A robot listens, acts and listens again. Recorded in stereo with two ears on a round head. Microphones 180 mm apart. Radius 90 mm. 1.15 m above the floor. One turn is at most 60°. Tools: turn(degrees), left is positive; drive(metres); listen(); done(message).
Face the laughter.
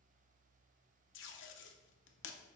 listen()
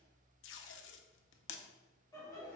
turn(degrees=15)
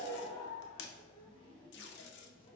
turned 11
turn(degrees=60)
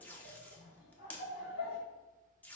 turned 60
turn(degrees=60)
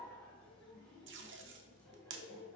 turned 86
done("Facing the laughter.")